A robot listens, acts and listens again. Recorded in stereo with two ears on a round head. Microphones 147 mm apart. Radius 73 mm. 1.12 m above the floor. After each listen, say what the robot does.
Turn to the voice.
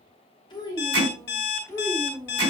Turn 30° left.
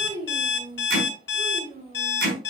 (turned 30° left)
Turn 40° right.
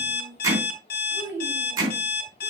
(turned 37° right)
Turn 15° right.
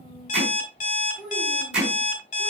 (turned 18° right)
Facing the child speaking.